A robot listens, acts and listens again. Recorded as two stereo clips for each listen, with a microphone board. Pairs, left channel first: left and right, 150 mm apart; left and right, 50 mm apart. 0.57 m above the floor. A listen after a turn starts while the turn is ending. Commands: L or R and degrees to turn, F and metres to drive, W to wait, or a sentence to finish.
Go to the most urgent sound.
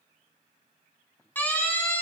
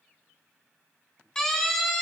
L30
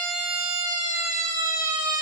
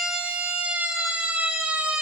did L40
R30
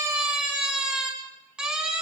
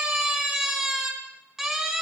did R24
F1.0
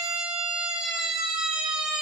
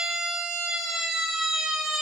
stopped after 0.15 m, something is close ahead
Something is in my way. I am facing the siren but have not reached it.